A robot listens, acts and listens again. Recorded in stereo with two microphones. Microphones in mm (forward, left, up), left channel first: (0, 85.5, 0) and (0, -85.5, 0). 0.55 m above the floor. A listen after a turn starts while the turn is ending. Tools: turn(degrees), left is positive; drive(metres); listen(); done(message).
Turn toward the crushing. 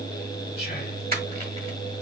listen()
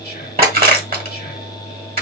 turn(degrees=-60)
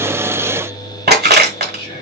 turn(degrees=-65)
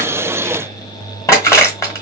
turn(degrees=15)
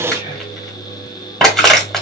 done("Found it: crushing, straight ahead.")